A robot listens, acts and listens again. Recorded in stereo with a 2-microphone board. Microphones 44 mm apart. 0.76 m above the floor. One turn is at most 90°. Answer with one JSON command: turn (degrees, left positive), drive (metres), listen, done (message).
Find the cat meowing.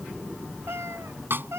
{"turn": -90}
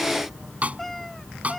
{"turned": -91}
{"done": "Found it: a cat meowing, straight ahead."}